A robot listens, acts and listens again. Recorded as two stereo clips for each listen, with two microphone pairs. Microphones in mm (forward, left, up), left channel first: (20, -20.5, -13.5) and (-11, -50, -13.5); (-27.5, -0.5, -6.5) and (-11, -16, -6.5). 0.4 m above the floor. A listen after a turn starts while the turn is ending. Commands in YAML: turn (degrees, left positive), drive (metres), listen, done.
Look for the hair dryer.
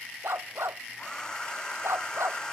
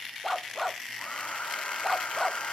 turn: 115
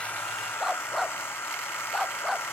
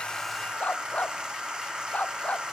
turn: 15
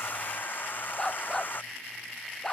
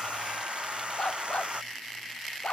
done: "Facing the hair dryer."